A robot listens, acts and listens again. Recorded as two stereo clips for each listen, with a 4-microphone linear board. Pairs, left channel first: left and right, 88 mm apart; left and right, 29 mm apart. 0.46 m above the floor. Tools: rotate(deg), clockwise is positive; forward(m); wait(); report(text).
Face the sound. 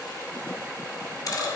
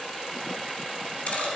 rotate(-45)
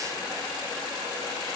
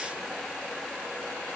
wait()
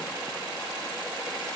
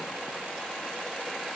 report("I heard a dropped coin, but can't make it out now. It was about straight ahead or 90° left.")